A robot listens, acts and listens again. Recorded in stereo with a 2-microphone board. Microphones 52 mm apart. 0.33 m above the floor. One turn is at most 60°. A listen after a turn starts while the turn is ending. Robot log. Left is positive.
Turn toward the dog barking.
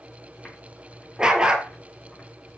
note: The dog barking: about 15° right or 165° right.
cmd yaw -15
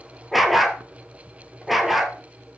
end: Found it: a dog barking, straight ahead.